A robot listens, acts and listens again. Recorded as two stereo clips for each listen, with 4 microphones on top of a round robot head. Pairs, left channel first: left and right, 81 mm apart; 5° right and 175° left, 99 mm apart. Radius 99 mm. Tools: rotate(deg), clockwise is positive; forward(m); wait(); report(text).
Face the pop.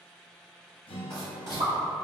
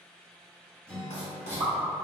rotate(100)
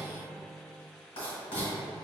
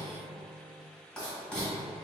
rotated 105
report("Facing where the pop came from. I can't hear it now.")